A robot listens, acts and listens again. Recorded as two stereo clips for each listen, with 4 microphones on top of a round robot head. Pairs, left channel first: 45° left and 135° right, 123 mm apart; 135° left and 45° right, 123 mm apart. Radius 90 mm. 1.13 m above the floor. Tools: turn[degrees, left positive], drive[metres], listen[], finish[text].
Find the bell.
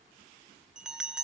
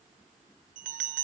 Thought: The bell: 50° right.
Action: turn[-50]
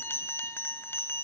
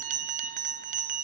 Thought: The bell is now 30° right.
Action: turn[-30]
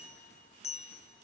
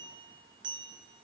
Thought: The bell is now 10° left.
Action: turn[10]
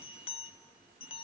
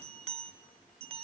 Action: finish[Facing the bell, under 1 m away.]